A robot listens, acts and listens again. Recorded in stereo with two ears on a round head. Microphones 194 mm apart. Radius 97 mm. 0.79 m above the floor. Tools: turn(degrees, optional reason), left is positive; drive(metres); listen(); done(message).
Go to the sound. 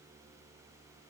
listen()
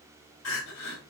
turn(degrees=65, reason="The crying: about 65° left or 115° left.")
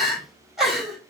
drive(metres=1.0)
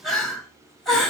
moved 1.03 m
drive(metres=1.0)
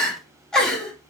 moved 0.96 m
drive(metres=1.0)
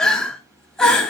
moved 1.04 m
drive(metres=1.0)
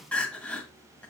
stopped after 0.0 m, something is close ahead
done("Arrived at the crying, straight ahead.")